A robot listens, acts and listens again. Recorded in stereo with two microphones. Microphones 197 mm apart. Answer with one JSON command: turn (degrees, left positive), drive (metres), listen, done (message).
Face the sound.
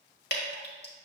{"turn": 60}
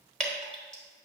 {"done": "Facing the dripping."}